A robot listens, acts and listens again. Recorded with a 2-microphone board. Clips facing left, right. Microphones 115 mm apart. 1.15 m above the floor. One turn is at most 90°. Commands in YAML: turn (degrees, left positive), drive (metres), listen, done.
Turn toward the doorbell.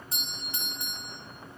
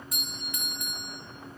turn: 30
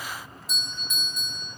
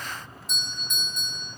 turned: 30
done: "Found it: a doorbell, straight ahead."